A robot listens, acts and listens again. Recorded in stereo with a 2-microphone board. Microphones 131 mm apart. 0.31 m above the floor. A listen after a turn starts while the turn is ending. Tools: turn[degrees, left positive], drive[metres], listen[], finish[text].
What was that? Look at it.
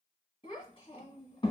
Thought: The child speaking: about 45° left or 135° left.
Action: turn[45]
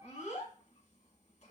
Thought: So it is at 85° left.
Action: turn[85]
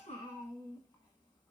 Thought: The child speaking is now 35° left.
Action: turn[35]
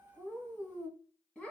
Thought: The child speaking is now 10° left.
Action: turn[10]
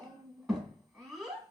Action: finish[Found it: a child speaking, straight ahead, 1 to 2 m away.]